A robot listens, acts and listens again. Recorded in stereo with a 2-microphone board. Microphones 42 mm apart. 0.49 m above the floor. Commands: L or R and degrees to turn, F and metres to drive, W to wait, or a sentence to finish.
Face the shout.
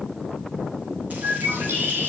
W
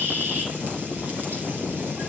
W
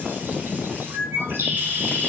I can't make out a shout, only a bird.